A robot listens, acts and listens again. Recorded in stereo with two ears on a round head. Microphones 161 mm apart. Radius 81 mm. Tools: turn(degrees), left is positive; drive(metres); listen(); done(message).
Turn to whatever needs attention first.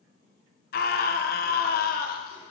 turn(degrees=55)
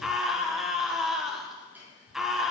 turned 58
done("Facing the scream.")